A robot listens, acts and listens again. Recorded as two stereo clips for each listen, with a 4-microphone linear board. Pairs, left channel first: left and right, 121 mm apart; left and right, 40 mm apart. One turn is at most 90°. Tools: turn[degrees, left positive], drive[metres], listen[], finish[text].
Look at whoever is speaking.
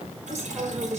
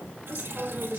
Thought: The woman speaking: about 25° right or 155° right.
Action: turn[-25]
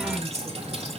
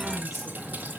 Action: listen[]
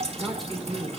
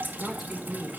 Action: finish[Facing the woman speaking.]